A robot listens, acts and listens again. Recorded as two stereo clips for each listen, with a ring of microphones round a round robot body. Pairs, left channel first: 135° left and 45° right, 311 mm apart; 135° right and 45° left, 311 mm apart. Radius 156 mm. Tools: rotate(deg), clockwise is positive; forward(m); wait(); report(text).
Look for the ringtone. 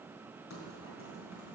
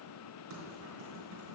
wait()
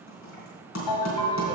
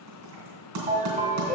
rotate(-115)
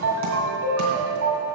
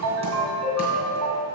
report("Facing the ringtone.")